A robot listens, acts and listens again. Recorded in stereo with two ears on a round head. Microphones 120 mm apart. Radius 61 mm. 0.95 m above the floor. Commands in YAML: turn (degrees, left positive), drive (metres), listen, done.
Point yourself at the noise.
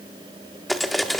turn: 30
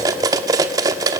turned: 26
turn: -25
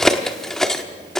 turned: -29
done: "Facing the cutlery clinking."